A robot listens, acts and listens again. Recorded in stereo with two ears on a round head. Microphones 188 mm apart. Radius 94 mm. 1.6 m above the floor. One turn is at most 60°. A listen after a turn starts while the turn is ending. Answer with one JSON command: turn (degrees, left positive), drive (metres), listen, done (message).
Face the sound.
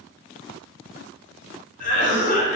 {"turn": 40}
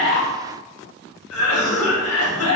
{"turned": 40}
{"turn": 60}
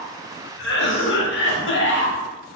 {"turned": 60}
{"turn": 55}
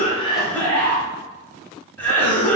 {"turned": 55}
{"turn": 10}
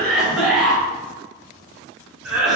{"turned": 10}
{"done": "Facing the cough, under 1 m away."}